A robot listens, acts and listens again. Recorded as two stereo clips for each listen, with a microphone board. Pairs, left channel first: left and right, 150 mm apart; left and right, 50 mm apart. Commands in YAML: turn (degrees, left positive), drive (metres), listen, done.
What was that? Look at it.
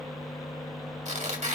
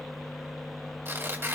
turn: -55
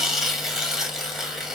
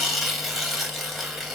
done: "Found it: tearing paper, straight ahead, 2 to 4 m away."